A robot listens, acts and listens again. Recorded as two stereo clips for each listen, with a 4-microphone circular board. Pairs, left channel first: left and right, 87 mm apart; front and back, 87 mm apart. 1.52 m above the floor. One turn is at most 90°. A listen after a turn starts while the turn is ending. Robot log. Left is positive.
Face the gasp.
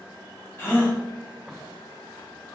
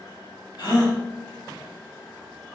note: The gasp: 30° left.
cmd yaw +30
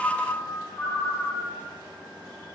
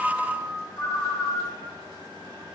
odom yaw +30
end: Facing where the gasp came from. I can't hear it now.